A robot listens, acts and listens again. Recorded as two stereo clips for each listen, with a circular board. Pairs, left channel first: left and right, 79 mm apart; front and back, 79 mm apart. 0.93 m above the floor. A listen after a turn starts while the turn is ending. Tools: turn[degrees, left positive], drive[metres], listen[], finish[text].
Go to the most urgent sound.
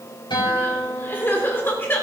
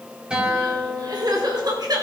Thought: The crying: 150° left.
Action: turn[150]
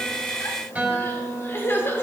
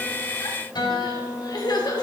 Thought: The crying is now 30° left.
Action: turn[30]
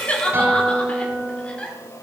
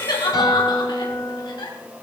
Thought: The crying is now 15° left.
Action: turn[15]
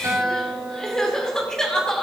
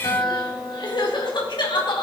Action: drive[1.0]
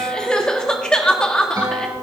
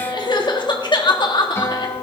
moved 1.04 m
Thought: The crying is now 10° left.
Action: turn[10]
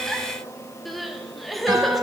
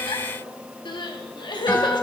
Action: drive[1.0]
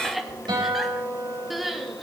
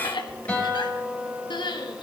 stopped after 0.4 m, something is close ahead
Action: finish[I am next to the crying.]